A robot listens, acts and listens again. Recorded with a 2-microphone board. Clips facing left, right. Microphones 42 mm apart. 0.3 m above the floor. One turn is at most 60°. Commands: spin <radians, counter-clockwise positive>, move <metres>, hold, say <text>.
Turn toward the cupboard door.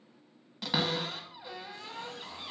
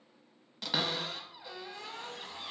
spin 0.52
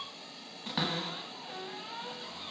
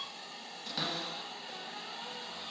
spin 1.05
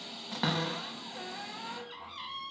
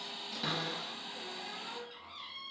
spin 1.05
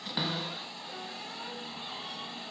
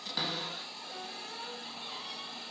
spin 0.35
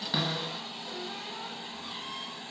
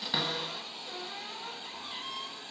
say Facing the cupboard door, under 1 m away.